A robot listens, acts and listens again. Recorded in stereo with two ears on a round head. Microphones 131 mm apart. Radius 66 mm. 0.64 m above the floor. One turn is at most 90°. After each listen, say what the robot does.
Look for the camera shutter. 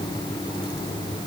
Keep listening.
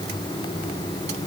Keep listening.
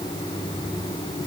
I can't make out a camera shutter to turn to.